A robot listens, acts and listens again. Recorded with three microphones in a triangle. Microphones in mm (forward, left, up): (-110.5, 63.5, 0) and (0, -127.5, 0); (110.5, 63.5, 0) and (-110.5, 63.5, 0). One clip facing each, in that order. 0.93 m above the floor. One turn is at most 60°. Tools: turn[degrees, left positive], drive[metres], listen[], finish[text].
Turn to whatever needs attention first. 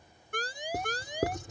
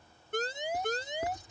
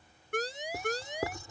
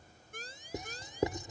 Action: finish[Facing the siren.]